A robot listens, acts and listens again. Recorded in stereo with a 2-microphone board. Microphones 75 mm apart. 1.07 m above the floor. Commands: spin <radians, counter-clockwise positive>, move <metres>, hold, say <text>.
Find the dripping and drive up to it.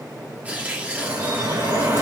spin -0.87
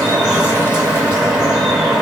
move 1.0
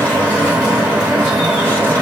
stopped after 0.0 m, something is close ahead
spin -0.17
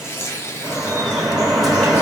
say Something is in my way. I am facing the dripping but have not reached it.